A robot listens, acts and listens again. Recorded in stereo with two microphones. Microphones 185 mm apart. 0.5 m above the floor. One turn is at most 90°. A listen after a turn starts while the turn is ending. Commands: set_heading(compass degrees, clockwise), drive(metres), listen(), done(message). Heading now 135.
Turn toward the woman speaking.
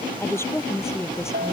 set_heading(105)
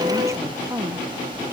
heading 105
set_heading(120)
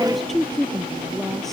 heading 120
done("Facing the woman speaking.")